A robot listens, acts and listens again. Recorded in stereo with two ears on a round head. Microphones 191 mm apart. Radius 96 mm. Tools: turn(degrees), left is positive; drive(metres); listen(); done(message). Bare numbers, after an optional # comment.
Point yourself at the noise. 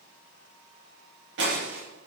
# The breaking glass: about 60° right or 120° right.
turn(-60)
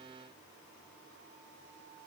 listen()
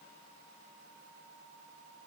done("I heard breaking glass, but can't make it out now. It was about straight ahead or 60° right.")